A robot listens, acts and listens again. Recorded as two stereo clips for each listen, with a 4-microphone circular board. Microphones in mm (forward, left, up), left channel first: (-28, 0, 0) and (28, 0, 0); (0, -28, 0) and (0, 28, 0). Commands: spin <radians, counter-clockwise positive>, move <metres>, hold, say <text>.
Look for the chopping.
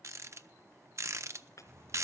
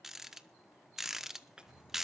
spin 2.88
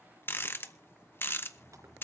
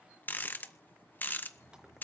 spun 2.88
hold
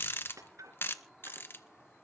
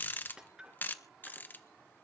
spin 0.26
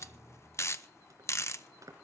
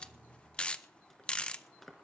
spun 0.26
say Found it: chopping, straight ahead.